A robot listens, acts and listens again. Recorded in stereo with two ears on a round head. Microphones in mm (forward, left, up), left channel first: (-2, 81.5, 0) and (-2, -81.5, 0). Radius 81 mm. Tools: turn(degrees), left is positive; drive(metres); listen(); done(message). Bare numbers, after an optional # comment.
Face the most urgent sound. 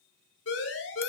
# The siren: about 70° left or 110° left.
turn(70)
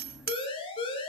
# So it is at 30° left.
turn(30)
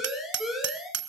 done("Facing the siren.")